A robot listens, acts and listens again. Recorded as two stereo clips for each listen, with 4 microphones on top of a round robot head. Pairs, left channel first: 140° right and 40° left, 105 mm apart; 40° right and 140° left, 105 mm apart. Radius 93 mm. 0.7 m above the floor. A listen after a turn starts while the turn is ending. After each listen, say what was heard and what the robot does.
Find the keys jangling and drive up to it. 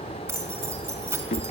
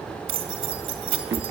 The keys jangling: 110° left. Turn 110° left.
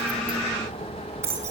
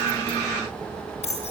The keys jangling is now 25° right. Turn 25° right.
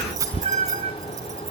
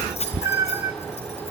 The keys jangling is now 20° right. Turn 20° right.
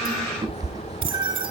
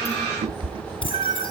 Keep listening.
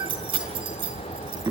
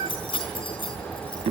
Drive 1.0 m forward.
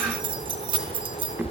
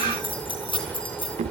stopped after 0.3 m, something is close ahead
Blocked. The keys jangling is further on, straight ahead.